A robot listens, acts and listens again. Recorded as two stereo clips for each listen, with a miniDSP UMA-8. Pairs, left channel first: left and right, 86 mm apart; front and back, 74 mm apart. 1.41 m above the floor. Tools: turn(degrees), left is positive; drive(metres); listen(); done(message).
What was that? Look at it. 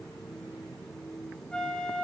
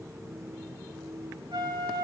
turn(degrees=170)
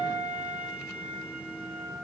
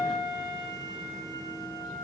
turn(degrees=-20)
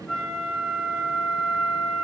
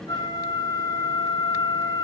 done("Found it: a flute, straight ahead, over 4 m away.")